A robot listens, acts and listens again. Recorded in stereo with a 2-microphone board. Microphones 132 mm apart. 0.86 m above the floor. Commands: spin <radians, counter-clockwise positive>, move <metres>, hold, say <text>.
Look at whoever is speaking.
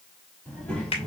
spin 0.52
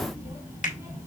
spin -0.35
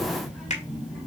say Facing the child speaking.